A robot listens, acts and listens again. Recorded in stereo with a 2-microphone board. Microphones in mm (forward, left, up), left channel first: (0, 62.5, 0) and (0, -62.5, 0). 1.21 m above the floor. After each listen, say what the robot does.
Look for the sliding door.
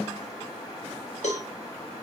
Keep listening.
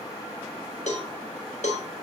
Keep listening.
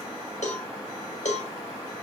I can't make out a sliding door, only a cowbell.